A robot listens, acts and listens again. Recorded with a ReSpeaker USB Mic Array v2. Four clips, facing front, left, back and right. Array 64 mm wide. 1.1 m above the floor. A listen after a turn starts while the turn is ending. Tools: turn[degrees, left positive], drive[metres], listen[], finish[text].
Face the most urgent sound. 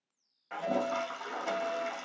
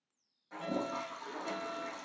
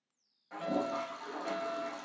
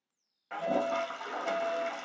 Thought: The fire alarm: 165° left.
Action: turn[165]
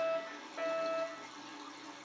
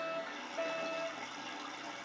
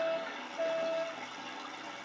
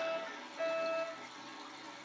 Thought: The fire alarm is now 10° left.
Action: turn[10]
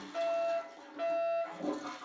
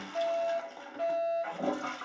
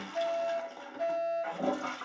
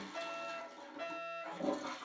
Action: finish[Facing the fire alarm, 2 to 4 m away.]